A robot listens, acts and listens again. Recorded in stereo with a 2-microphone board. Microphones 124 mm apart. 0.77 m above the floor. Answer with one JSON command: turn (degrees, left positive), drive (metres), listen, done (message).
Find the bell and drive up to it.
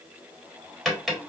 {"listen": true}
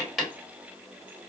{"listen": true}
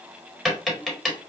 {"done": "I can't make out a bell, only tapping."}